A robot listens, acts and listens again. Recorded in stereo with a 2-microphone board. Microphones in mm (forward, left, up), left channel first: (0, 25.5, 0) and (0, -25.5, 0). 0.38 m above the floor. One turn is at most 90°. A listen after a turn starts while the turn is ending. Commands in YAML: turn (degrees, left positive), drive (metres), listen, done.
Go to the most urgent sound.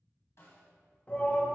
turn: 30
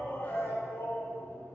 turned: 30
turn: 90
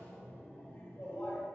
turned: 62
turn: 50
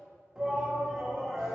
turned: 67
turn: -15
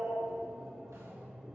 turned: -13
drive: 1.0
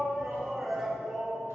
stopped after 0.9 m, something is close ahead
turn: -10
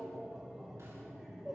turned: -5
done: "Arrived at the shout, straight ahead."